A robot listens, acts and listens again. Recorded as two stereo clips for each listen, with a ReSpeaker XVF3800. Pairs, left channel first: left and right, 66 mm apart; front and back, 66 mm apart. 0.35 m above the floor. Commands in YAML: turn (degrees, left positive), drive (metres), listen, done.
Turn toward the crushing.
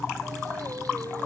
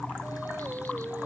listen: true
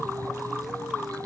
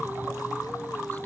listen: true
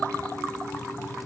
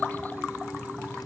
done: "I can't make out crushing to turn to."